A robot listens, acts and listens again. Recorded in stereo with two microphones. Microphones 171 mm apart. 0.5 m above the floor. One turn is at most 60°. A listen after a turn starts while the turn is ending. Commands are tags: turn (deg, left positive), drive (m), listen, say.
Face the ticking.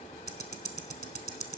<turn deg="-60"/>
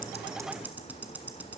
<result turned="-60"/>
<turn deg="-10"/>
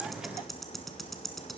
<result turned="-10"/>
<say>Found it: ticking, straight ahead.</say>